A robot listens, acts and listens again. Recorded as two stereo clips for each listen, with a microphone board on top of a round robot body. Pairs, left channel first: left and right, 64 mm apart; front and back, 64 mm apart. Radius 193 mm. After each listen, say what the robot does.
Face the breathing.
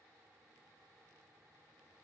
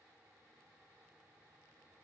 Keep listening.
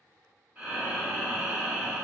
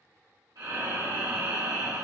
Turn 155° right.
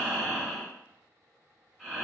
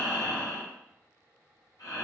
Found it: breathing, straight ahead, 1 to 2 m away.